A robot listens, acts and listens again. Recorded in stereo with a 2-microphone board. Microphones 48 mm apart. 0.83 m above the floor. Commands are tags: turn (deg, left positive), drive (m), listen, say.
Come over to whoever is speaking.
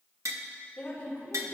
<turn deg="25"/>
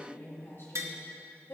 <turn deg="130"/>
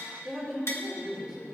<drive m="1.0"/>
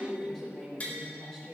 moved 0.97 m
<drive m="1.0"/>
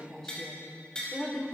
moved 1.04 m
<turn deg="10"/>
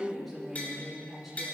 <drive m="1.0"/>
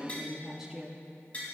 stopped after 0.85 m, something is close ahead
<turn deg="-10"/>
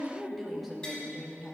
<say>I am next to the woman speaking.</say>